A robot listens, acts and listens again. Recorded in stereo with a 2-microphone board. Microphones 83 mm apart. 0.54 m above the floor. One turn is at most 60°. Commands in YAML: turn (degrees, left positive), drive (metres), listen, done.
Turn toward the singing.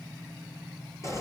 listen: true
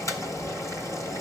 listen: true
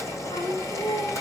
turn: 60
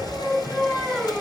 turn: 15
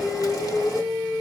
done: "Found it: singing, straight ahead, over 4 m away."